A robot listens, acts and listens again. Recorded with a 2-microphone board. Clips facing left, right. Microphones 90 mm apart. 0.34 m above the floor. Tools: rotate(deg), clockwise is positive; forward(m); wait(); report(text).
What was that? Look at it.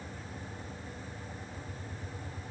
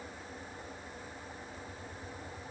wait()
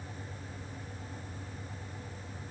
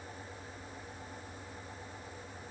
wait()
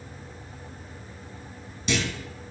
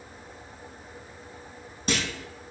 rotate(45)
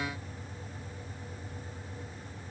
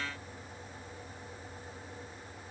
wait()
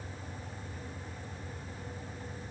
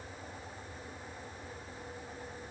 report("I heard a clunk, but can't make it out now. It was about straight ahead or 90° right.")